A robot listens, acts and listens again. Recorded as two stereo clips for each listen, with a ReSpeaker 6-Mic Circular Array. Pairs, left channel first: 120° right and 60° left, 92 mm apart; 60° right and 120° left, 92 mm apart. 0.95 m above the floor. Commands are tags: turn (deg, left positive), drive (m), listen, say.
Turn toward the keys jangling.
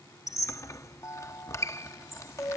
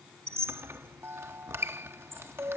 <listen/>
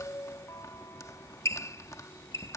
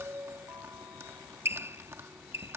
<listen/>
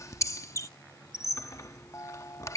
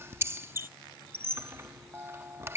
<say>I can't make out keys jangling to turn to.</say>